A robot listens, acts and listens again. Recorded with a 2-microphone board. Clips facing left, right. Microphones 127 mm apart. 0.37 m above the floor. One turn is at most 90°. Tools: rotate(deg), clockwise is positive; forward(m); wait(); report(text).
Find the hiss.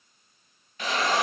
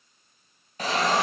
rotate(40)
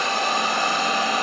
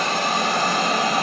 rotate(90)
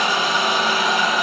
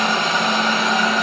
rotate(-10)
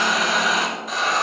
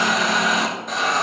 report("Found it: a hiss, straight ahead.")